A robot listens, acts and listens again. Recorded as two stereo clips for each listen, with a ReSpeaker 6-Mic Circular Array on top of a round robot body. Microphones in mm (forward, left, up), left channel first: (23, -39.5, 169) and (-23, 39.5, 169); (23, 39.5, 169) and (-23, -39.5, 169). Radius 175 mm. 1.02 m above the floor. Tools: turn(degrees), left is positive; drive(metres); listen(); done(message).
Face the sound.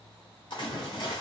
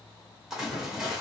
turn(degrees=-35)
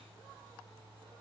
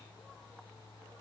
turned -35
done("Facing where the splash came from. I can't hear it now.")